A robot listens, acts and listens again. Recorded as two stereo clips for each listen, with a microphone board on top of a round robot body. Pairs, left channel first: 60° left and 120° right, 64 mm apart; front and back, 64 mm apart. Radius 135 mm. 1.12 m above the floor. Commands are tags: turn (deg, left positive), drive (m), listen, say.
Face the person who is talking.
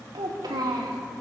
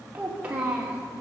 <turn deg="-110"/>
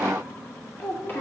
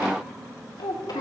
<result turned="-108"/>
<say>Facing the child speaking.</say>